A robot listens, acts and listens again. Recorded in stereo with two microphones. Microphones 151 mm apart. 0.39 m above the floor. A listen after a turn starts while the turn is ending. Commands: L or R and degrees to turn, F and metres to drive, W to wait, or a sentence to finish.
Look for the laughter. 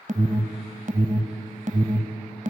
W
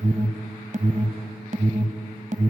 W
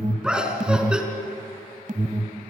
R30
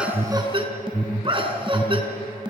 R145
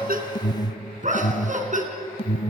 R60
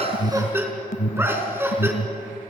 R15
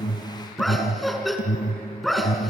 Found it: laughter, straight ahead, over 4 m away.